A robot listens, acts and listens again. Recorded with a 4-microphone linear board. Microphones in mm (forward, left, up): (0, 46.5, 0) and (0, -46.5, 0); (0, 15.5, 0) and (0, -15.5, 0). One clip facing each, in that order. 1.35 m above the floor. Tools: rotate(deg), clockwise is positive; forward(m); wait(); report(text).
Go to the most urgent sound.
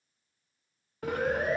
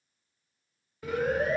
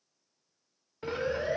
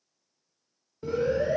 rotate(-25)
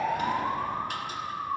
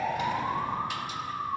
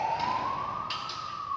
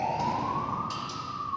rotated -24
forward(1.0)
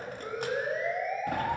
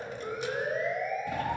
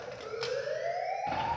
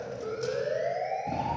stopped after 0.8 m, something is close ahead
report("Something is in my way. I am facing the siren but have not reached it.")